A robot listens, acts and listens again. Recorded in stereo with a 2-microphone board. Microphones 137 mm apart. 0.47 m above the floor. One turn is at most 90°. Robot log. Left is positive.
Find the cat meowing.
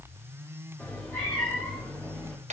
cmd yaw +30
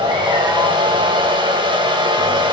cmd idle
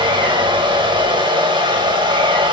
cmd idle
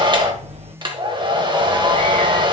note: So it is at 50° right.
cmd yaw -50
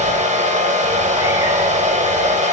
cmd idle
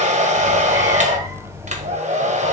note: The cat meowing is now 20° right.
cmd yaw -20
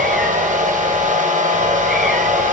cmd idle
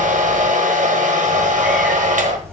end: Facing the cat meowing, 1 to 2 m away.